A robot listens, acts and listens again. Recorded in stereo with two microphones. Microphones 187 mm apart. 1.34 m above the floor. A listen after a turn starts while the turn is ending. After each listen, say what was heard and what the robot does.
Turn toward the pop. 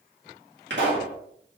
Turn 90° right.
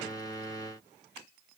I heard a pop from this way, but can't make it out now.